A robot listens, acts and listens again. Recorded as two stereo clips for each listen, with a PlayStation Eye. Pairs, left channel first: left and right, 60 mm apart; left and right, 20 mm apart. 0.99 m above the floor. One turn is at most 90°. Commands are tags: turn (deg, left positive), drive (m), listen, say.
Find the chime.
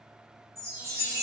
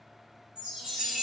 <turn deg="-50"/>
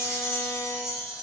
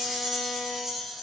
<say>Found it: a chime, straight ahead, under 1 m away.</say>